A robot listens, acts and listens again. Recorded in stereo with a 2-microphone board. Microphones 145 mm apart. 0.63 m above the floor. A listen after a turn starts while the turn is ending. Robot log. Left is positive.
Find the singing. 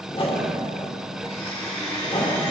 cmd idle
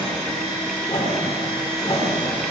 cmd idle
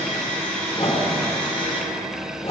end: I can't make out singing, only a whoosh and a blender.